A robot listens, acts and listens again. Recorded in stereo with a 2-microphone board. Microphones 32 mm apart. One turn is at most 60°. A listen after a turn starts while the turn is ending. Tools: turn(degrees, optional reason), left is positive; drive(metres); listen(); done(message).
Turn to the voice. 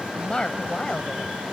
turn(degrees=30, reason="The woman speaking: about 30° left or 150° left.")
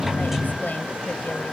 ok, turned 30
listen()
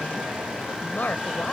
turn(degrees=60, reason="So it is at 115° left.")
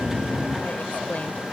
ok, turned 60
turn(degrees=55, reason="Nothing new. It was at 55° left.")
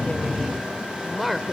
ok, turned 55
done("Facing the woman speaking.")